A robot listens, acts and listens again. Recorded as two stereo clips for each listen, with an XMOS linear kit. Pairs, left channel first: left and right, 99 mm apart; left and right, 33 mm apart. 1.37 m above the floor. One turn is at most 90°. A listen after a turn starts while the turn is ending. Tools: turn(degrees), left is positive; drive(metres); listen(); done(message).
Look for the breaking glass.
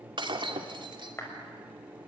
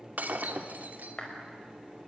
turn(degrees=-55)
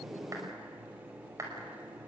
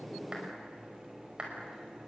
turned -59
listen()
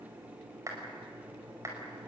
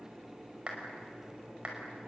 done("I heard breaking glass, but can't make it out now. It was about 5° left or 70° right.")